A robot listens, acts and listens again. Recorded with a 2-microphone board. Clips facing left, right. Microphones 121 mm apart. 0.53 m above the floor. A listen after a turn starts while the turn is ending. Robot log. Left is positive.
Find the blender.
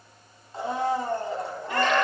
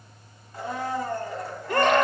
note: The blender: about 25° left or 155° left.
cmd yaw +25
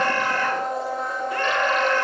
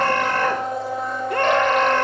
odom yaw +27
end: Facing the blender.